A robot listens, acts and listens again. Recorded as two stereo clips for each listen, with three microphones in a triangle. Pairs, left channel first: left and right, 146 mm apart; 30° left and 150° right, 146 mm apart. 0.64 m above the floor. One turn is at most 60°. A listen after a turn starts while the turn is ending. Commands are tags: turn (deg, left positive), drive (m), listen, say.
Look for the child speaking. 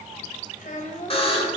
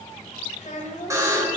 <turn deg="60"/>
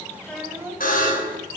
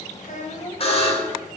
<turn deg="-20"/>
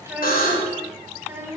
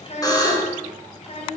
<turn deg="-20"/>
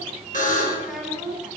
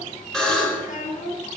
<say>Found it: a child speaking, straight ahead, 2 to 4 m away.</say>